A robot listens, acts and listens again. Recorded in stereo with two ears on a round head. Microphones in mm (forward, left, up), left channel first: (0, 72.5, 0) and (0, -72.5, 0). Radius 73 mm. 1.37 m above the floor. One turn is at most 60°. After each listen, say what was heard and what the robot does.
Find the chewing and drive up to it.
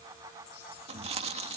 The chewing: about 40° right or 140° right. Turn 40° right.
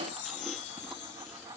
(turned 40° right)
Keep listening.
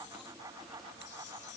Keep listening.
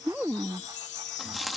Drive 1.0 m forward.
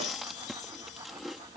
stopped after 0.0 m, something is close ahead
Blocked. The chewing is further on, straight ahead.